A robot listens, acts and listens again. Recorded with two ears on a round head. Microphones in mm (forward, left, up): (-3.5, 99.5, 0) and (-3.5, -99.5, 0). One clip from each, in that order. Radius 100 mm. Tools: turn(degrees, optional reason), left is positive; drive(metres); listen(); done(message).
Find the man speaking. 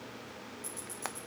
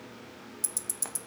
listen()
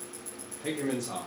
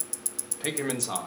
turn(degrees=-45, reason="The man speaking: about 45° right or 135° right.")
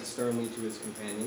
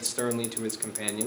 turn(degrees=-105, reason="So it is at 105° right.")
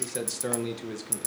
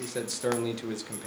turn(degrees=-10, reason="The man speaking is now 10° right.")
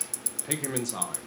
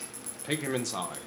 turn(degrees=-10, reason="The man speaking is now 10° right.")
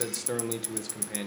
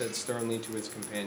done("Facing the man speaking.")